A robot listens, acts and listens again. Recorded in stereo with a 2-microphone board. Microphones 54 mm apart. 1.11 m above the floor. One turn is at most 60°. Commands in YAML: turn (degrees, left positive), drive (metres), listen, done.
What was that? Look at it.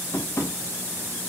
turn: 60
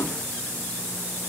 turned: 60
listen: true
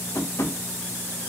turn: 55
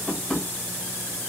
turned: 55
turn: 10
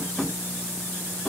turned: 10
done: "Facing the tapping."